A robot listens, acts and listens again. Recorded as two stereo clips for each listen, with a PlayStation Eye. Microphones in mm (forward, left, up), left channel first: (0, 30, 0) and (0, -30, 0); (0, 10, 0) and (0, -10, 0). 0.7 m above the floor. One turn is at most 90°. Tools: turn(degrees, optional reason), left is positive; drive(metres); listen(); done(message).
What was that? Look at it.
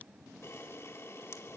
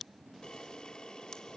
turn(degrees=45, reason="The camera shutter: about 45° left or 135° left.")
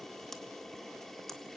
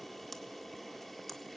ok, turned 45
done("Found it: a camera shutter, straight ahead.")